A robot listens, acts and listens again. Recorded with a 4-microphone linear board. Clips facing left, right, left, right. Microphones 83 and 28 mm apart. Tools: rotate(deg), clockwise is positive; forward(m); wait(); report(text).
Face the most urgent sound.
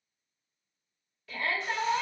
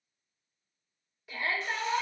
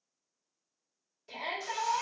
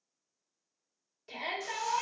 rotate(15)
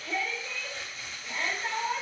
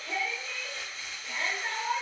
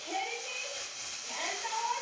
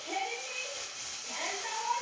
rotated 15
report("Found it: a shout, straight ahead, 1 to 2 m away.")